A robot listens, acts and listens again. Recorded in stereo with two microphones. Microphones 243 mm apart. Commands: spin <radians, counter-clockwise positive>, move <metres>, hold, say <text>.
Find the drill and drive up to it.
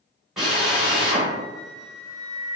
spin 0.52
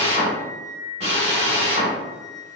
spin -0.52
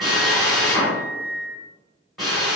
move 1.0
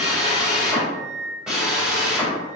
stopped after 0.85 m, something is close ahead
say Arrived at the drill, straight ahead.